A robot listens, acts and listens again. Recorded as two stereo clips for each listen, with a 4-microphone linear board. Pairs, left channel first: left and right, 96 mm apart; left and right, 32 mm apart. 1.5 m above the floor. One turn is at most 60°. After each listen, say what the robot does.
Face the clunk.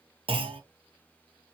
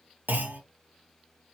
Turn 60° right.
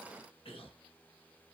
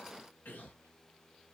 Keep listening.
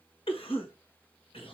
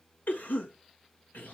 I heard a clunk, but can't make it out now. It was about 15° right or 45° right.